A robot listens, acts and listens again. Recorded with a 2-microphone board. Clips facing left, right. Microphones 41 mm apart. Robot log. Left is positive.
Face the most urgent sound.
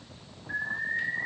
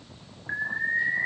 note: The alarm: about 45° right or 135° right.
cmd yaw -45
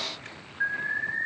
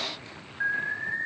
end: Facing the alarm, 2 to 4 m away.